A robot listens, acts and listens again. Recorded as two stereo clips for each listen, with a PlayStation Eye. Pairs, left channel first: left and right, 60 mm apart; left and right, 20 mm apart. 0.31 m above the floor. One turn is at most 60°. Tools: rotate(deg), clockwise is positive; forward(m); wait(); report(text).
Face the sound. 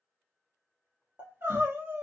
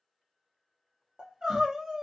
rotate(35)
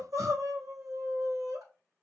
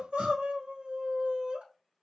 rotate(60)
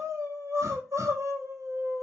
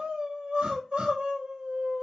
rotate(60)
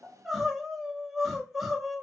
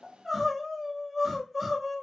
report("Found it: crying, straight ahead.")